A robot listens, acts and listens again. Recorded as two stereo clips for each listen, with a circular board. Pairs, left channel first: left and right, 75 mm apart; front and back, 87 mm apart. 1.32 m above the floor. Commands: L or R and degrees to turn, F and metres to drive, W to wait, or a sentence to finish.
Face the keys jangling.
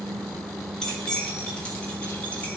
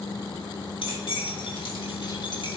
L10
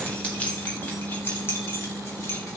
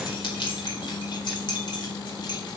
L40
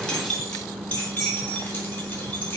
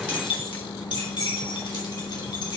L25
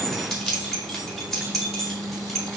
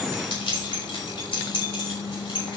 Facing the keys jangling, 2 to 4 m away.